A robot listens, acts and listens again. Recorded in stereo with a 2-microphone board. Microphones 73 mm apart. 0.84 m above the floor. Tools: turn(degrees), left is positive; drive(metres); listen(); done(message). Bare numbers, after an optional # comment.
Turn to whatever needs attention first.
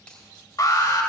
# The alarm: about 60° left or 120° left.
turn(60)
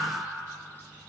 listen()
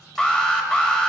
# So it is at 15° left.
turn(15)
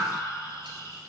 listen()
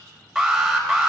done("Facing the alarm, 1 to 2 m away.")